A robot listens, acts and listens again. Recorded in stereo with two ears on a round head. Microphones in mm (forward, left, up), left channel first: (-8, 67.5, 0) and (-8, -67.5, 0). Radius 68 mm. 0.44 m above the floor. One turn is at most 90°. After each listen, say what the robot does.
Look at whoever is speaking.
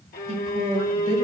Turn 40° right.
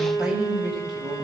Facing the woman speaking, 2 to 4 m away.